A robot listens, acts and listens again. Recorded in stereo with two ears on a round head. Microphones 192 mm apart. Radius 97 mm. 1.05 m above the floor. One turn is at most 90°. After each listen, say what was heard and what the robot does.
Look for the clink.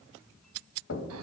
Keep listening.
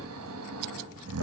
Keep listening.
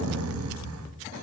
I can't make out a clink to turn to.